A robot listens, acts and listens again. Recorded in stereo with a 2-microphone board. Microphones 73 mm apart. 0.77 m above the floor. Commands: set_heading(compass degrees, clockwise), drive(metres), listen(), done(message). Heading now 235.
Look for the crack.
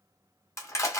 listen()
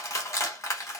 listen()
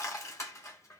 done("I can't make out a crack to turn to.")